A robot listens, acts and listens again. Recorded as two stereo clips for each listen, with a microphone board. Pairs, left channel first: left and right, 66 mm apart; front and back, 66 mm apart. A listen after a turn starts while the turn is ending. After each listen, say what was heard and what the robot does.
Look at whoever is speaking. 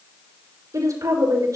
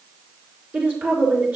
The woman speaking: 120° right. Turn 120° right.
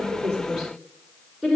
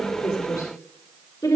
Found it: a woman speaking, straight ahead, over 4 m away.